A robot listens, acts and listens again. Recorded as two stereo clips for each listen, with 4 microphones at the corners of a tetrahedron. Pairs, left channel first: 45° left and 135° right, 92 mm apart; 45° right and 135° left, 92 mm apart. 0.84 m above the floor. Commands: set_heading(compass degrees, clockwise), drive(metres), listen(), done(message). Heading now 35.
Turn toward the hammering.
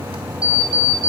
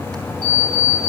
listen()
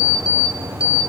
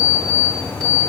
listen()
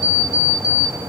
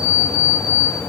done("I can't make out hammering to turn to.")